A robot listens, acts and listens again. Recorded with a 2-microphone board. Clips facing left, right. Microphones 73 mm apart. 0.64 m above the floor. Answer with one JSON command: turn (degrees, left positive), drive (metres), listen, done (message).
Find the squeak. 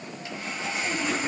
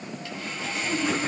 {"listen": true}
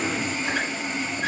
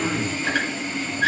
{"turn": -90}
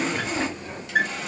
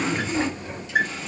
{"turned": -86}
{"turn": -10}
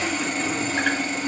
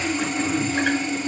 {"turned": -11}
{"listen": true}
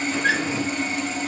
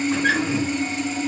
{"done": "Facing the squeak."}